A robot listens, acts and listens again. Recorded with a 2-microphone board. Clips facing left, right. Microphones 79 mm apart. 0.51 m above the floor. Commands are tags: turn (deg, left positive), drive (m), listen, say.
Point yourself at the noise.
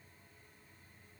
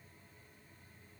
<listen/>
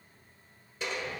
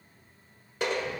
<turn deg="-60"/>
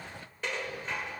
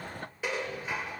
<turn deg="-10"/>
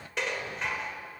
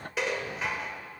<say>Facing the dishes clattering.</say>